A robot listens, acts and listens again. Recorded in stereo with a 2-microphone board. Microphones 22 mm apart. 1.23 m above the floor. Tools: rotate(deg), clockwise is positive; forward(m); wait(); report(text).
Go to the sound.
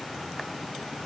wait()
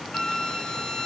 rotate(-40)
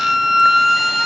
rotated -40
forward(1.0)
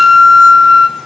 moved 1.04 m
rotate(10)
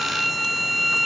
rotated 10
forward(1.0)
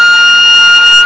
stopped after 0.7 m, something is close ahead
rotate(15)
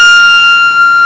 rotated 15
report("Arrived at the flute, straight ahead.")